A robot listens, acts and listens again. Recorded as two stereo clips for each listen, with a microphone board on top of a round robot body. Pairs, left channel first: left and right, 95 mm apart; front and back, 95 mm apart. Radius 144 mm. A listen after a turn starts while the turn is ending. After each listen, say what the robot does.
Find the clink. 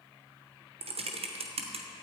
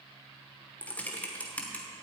Keep listening.
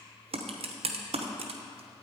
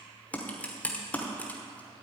Keep listening.
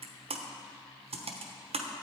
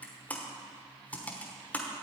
I can't make out a clink, only typing on a keyboard.